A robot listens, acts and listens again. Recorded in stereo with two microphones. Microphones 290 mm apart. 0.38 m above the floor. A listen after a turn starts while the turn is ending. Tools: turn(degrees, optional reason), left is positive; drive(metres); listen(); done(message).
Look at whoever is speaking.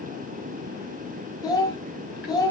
turn(degrees=30)
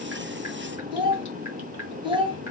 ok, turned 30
turn(degrees=-20, reason="So it is at 20° right.")
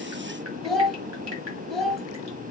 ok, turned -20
done("Found it: a child speaking, straight ahead, 1 to 2 m away.")